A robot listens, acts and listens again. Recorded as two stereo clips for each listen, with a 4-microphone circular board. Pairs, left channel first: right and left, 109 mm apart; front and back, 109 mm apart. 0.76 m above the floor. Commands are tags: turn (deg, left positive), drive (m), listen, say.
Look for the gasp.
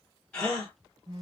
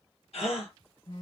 <turn deg="-10"/>
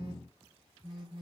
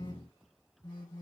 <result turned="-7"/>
<say>I heard a gasp from this way, but can't make it out now.</say>